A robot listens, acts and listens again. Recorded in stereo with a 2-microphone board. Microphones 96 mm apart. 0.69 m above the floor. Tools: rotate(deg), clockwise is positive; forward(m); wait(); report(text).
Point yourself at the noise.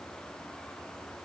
wait()
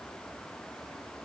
wait()
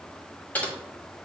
rotate(-30)
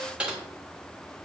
rotate(15)
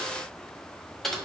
report("Found it: typing on a keyboard, straight ahead, 1 to 2 m away.")